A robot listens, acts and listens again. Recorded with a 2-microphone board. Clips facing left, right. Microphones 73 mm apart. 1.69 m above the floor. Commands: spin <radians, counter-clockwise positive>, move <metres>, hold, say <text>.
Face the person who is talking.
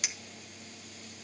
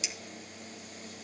hold
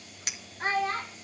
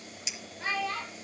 spin 0.79
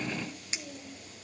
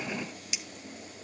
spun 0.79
hold
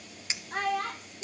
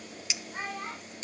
spin 1.57
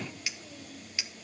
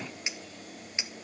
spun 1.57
hold
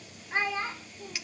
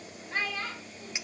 spin 0.35
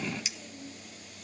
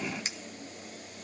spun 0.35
hold
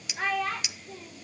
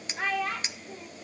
say Found it: a child speaking, straight ahead.